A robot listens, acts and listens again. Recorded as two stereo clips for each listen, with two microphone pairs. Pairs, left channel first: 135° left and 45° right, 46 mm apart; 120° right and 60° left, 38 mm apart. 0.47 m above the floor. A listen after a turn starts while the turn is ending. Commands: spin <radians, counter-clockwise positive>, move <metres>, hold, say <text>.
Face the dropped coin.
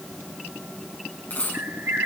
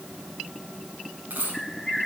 spin 1.66
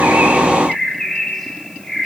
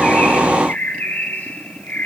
say Facing where the dropped coin came from. I can't hear it now.